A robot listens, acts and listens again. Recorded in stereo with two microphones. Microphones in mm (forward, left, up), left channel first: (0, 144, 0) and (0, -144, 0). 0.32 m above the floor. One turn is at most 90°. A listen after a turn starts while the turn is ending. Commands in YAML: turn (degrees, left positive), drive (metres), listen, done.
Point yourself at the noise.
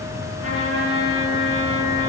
turn: 50
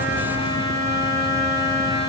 turn: 75
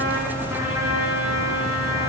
turn: -10
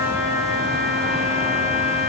done: "Found it: a trumpet, straight ahead, 2 to 4 m away."